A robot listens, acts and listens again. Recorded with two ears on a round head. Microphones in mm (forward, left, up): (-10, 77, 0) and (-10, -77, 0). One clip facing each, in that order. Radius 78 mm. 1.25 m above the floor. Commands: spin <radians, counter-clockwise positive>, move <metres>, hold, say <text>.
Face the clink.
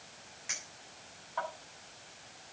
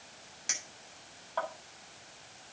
spin -0.87
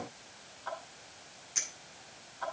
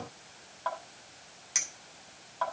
spin -1.40
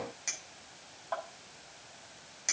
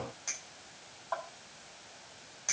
spin 0.35
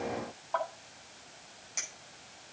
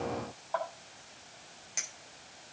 say Found it: a clink, straight ahead.